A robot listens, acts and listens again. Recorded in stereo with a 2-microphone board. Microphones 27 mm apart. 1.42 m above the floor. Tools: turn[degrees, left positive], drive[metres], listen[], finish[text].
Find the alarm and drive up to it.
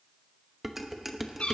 Action: listen[]
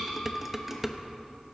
Action: listen[]
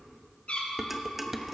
Action: finish[I can't make out an alarm to turn to.]